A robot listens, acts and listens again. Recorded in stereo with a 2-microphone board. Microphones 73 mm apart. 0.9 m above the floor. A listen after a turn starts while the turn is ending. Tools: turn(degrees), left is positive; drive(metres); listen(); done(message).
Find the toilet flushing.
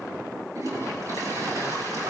turn(degrees=-50)
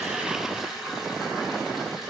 done("Facing the toilet flushing.")